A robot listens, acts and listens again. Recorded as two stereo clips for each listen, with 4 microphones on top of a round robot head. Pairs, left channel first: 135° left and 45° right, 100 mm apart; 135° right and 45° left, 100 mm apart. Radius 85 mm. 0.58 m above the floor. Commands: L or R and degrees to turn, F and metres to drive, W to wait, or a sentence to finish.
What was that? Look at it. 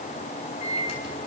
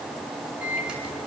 L125
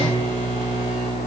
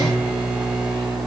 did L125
Found it: a microwave, straight ahead.